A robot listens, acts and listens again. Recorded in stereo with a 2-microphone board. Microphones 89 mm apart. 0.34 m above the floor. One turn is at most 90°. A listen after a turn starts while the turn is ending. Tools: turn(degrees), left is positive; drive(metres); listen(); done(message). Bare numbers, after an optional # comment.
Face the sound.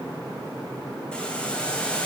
turn(30)
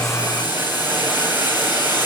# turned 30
# So it is at 20° right.
turn(-20)
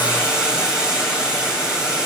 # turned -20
# The boiling is now 10° right.
turn(-10)
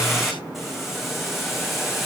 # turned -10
done("Found it: boiling, straight ahead, 2 to 4 m away.")